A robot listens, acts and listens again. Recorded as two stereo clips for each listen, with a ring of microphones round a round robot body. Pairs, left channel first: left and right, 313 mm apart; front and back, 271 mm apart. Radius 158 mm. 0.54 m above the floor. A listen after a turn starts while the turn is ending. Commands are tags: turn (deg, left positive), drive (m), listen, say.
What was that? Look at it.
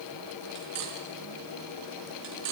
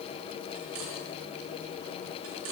<turn deg="-130"/>
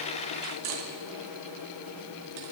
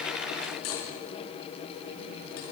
<turn deg="-50"/>
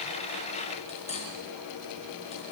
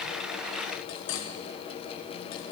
<turn deg="20"/>
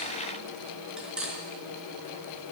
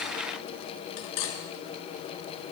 <say>Found it: cutlery clinking, straight ahead, over 4 m away.</say>